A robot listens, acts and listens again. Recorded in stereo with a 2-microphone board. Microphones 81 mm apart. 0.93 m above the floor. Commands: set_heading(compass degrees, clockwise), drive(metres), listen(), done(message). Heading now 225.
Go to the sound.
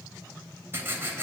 set_heading(255)
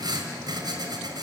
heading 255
set_heading(15)
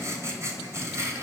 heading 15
set_heading(50)
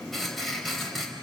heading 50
drive(1.0)
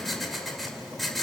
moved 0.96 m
drive(1.0)
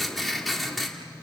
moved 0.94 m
drive(1.0)
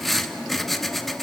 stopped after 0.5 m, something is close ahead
done("Arrived at the writing, straight ahead.")